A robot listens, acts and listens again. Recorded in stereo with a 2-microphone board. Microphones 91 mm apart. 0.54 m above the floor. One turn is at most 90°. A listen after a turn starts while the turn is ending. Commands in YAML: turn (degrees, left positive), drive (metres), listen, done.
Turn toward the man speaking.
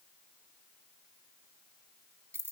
listen: true
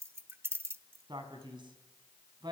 turn: -60
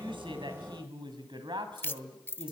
turn: -70
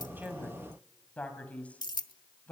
turn: 15
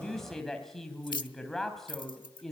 done: "Facing the man speaking, 2 to 4 m away."